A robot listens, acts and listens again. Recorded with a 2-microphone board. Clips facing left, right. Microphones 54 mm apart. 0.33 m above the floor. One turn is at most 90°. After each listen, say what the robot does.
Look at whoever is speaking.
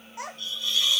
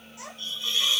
Turn 55° left.
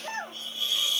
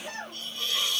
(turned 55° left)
Turn 40° left.
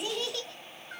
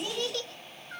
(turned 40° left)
Found it: a child speaking, straight ahead, under 1 m away.